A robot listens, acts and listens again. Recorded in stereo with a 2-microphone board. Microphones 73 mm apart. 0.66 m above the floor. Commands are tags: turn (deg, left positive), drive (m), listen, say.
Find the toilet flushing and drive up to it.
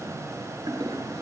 <turn deg="-70"/>
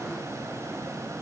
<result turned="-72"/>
<listen/>
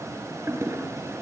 <turn deg="-35"/>
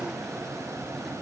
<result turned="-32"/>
<listen/>
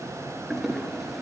<drive m="1.0"/>
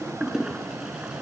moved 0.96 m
<turn deg="-10"/>
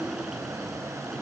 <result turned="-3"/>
<listen/>
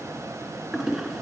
<drive m="1.0"/>
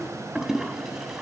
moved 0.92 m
<drive m="1.0"/>
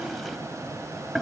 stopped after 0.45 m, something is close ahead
<say>Arrived at the toilet flushing, straight ahead.</say>